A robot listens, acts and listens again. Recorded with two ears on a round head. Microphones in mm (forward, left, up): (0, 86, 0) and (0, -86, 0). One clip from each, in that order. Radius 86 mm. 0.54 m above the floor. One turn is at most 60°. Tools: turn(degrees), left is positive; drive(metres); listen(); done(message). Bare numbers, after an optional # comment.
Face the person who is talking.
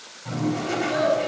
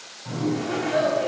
# The child speaking: about 20° left or 160° left.
turn(20)
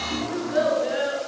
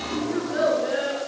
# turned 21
turn(30)
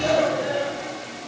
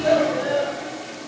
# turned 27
# So it is at 25° right.
turn(-25)
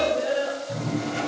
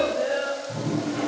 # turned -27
done("Facing the child speaking, over 4 m away.")